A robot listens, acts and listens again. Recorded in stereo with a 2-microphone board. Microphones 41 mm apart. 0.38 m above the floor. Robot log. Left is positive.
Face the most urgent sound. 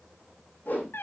cmd idle
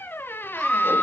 cmd yaw +30
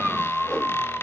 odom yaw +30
note: So it is at 15° right.
cmd yaw -15
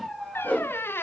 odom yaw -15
end: Facing the scream, over 4 m away.